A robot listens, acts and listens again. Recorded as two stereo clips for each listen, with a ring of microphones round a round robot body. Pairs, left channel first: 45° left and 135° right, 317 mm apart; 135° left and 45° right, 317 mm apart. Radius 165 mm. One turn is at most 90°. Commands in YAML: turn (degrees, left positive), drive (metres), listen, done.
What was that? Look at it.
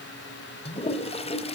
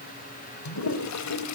turn: 90
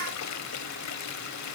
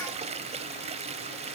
turn: 20
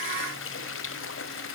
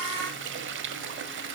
done: "Found it: a toilet flushing, straight ahead."